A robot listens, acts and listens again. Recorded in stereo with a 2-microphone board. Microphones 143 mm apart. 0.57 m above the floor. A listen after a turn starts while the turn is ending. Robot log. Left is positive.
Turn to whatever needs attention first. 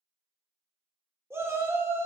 note: The shout: about 20° right or 160° right.
cmd yaw -20
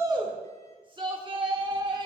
note: So it is at 135° right.
cmd yaw -135
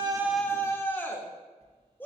note: The shout is now 20° left.
cmd yaw +20
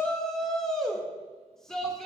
end: Facing the shout, 1 to 2 m away.